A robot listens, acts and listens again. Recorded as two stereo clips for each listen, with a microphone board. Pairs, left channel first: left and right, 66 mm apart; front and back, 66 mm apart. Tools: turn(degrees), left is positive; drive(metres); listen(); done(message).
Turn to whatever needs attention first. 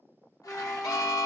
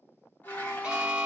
turn(degrees=105)
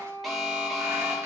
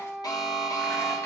done("Found it: an alarm, straight ahead.")